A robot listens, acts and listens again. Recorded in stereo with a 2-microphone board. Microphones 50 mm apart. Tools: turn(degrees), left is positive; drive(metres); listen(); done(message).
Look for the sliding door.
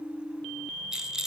listen()
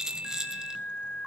listen()
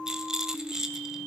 done("I can't make out a sliding door, only a rattle.")